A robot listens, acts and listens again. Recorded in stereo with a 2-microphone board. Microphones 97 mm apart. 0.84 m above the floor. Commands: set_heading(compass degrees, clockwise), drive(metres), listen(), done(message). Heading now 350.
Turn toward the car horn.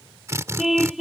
set_heading(20)
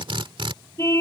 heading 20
set_heading(350)
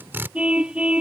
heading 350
set_heading(0)
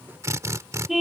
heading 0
done("Found it: a car horn, straight ahead.")